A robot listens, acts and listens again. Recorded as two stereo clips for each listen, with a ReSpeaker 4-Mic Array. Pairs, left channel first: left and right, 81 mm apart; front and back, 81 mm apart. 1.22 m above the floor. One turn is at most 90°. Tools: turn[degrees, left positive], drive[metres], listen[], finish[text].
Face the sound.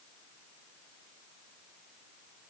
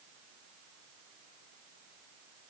Action: listen[]
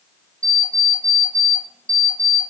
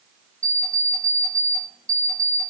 Thought: The alarm clock: 130° right.
Action: turn[-90]
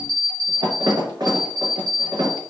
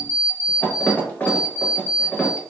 Thought: The alarm clock is now 70° right.
Action: turn[-70]
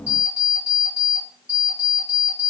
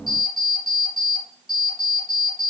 Thought: The alarm clock is now 20° right.
Action: turn[-20]
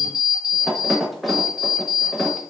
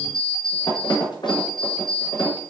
Action: finish[Facing the alarm clock.]